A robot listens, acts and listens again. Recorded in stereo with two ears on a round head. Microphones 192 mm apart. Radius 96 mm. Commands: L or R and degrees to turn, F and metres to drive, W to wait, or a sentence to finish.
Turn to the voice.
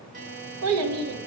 R90
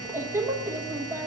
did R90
R10
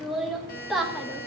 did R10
Found it: a child speaking, straight ahead, 1 to 2 m away.